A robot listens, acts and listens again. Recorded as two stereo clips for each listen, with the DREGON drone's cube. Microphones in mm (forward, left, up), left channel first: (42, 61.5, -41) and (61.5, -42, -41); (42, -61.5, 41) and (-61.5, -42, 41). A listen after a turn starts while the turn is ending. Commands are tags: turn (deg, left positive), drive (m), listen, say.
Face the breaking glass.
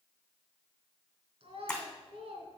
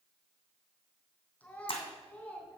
<turn deg="20"/>
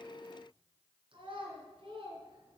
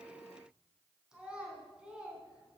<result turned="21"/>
<say>I heard breaking glass from this way, but can't make it out now.</say>